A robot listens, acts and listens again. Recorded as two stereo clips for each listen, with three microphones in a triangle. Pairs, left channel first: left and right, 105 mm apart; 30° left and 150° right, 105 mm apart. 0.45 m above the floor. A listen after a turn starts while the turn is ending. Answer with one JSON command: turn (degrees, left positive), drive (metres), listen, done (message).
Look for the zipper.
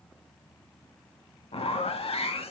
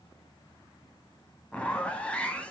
{"turn": 110}
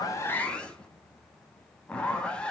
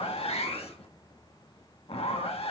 {"turn": 10}
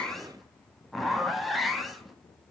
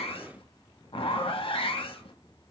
{"done": "Found it: a zipper, straight ahead."}